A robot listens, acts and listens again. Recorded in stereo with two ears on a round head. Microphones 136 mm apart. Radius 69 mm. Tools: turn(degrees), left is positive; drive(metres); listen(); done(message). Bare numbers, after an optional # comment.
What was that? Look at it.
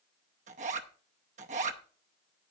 # The zipper: about 50° right or 130° right.
turn(-50)
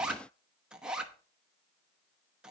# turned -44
done("Facing the zipper.")